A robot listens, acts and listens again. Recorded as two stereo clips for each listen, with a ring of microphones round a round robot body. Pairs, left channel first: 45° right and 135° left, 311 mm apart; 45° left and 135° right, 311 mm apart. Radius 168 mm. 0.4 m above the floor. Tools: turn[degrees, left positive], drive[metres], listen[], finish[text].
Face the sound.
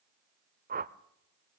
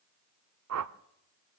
Thought: The whoosh: 165° right.
Action: turn[-165]
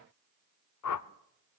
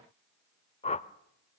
Thought: The whoosh is now 25° right.
Action: turn[-25]
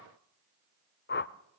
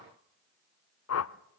Thought: The whoosh is now 10° left.
Action: turn[10]
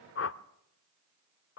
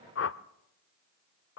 Action: finish[Found it: a whoosh, straight ahead.]